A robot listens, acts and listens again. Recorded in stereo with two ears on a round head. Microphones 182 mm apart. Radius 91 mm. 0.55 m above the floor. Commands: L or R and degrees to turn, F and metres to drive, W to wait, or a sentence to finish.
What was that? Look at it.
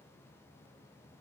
W
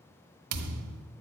R90
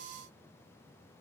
Facing where the thud came from. I can't hear it now.